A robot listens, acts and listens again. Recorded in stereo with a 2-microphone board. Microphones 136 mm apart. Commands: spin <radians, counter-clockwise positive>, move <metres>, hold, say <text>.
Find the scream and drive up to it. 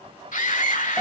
spin 1.22
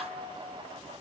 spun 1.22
hold
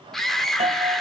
move 1.0
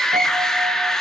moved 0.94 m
move 1.0
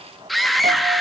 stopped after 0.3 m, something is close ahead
say I am next to the scream.